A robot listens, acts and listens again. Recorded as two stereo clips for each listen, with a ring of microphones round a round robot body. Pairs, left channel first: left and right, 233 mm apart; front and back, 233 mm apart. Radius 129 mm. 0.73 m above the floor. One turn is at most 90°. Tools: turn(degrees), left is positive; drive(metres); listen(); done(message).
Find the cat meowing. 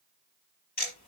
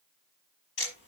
listen()
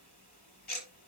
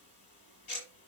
listen()
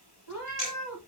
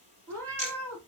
turn(degrees=80)
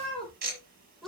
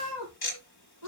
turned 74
done("Found it: a cat meowing, straight ahead.")